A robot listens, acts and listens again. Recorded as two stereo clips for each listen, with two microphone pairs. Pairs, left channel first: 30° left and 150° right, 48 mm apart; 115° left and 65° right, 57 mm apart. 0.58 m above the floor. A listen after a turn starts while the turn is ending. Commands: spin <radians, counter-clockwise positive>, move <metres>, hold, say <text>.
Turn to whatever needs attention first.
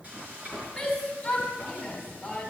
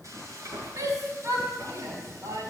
spin -0.87
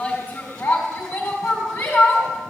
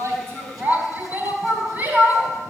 spin -0.17
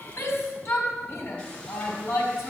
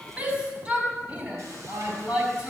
say Facing the shout, over 4 m away.